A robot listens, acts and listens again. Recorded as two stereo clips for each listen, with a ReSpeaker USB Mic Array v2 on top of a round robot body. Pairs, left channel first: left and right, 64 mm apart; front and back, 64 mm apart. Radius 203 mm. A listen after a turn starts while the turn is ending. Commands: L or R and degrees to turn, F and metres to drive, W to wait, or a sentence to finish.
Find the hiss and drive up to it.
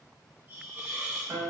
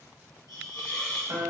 R25
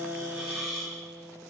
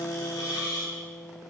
F1.0
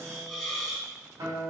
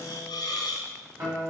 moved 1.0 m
F1.0
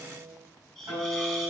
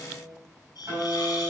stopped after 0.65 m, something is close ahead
L10
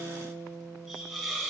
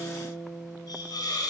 I am next to the hiss.